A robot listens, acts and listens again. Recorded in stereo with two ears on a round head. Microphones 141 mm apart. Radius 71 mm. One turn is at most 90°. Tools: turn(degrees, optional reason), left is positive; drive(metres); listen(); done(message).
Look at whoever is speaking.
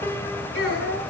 turn(degrees=90)
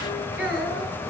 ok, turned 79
done("Found it: a child speaking, straight ahead, over 4 m away.")